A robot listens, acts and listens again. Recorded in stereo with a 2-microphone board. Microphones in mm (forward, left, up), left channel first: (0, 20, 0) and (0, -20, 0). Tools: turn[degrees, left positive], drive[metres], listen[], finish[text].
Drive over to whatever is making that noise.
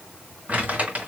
Thought: The crumpling: about 40° right or 140° right.
Action: turn[-40]
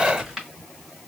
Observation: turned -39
Action: drive[1.0]
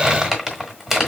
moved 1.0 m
Action: drive[1.0]
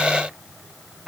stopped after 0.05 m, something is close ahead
Thought: The crumpling is now 10° right.
Action: turn[-10]
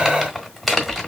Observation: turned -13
Action: finish[Arrived at the crumpling, straight ahead.]